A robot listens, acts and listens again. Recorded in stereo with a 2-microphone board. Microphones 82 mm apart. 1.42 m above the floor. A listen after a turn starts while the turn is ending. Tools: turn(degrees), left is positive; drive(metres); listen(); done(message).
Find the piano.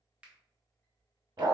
listen()
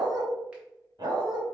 listen()
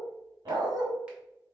done("I can't make out a piano, only a finger snap and a dog barking.")